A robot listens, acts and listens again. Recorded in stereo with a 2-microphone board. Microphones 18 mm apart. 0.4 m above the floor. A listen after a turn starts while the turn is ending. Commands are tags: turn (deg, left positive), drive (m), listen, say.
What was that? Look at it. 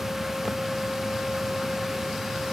<listen/>
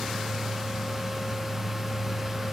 <listen/>
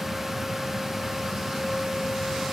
<say>I can't make out anything.</say>